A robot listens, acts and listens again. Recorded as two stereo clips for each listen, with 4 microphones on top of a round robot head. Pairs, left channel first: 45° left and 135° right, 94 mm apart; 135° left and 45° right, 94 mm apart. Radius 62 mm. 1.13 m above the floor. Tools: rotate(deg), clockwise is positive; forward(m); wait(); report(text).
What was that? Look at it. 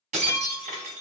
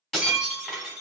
rotate(140)
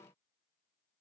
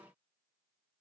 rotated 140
report("I heard breaking glass from this way, but can't make it out now.")